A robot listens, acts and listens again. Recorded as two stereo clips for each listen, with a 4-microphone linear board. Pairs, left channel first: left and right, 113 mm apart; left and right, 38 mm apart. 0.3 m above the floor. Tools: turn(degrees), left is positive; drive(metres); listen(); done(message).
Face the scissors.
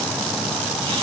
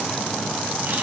listen()
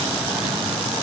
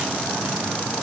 listen()
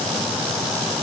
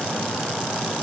done("I can't make out scissors to turn to.")